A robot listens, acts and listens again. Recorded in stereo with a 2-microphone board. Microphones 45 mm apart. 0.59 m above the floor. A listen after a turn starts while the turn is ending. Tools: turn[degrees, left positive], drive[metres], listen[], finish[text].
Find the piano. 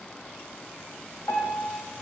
Thought: The piano: about 70° left or 110° left.
Action: turn[70]
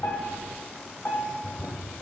Thought: So it is at 35° left.
Action: turn[35]
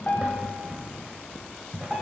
Action: finish[Facing the piano, 1 to 2 m away.]